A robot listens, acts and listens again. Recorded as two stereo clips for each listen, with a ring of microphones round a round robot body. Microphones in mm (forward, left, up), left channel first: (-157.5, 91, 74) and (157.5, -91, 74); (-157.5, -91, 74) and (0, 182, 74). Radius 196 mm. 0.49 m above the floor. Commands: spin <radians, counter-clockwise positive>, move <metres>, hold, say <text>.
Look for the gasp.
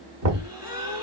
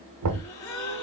spin -2.01
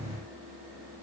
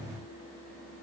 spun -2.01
say Facing where the gasp came from. I can't hear it now.